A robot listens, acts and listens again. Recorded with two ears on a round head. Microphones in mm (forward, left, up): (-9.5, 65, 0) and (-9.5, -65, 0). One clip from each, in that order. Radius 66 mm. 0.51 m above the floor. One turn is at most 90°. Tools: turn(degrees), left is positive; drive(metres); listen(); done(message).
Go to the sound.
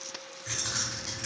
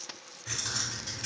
turn(degrees=30)
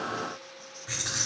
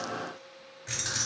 turn(degrees=-25)
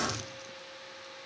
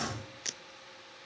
drive(metres=1.0)
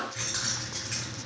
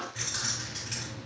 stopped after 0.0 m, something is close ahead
done("Blocked. The keys jangling is further on, straight ahead.")